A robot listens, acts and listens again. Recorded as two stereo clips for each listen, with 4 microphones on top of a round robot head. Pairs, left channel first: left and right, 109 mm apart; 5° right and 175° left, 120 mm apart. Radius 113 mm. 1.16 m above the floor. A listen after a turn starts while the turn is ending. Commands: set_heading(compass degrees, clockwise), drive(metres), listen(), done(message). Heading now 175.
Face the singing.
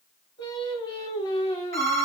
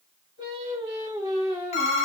set_heading(55)
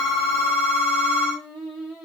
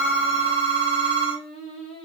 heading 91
set_heading(76)
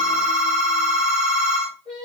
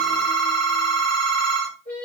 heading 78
set_heading(113)
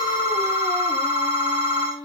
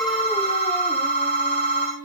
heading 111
set_heading(136)
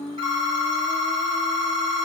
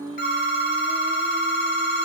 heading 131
listen()
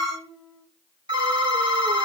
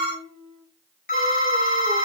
done("Facing the singing.")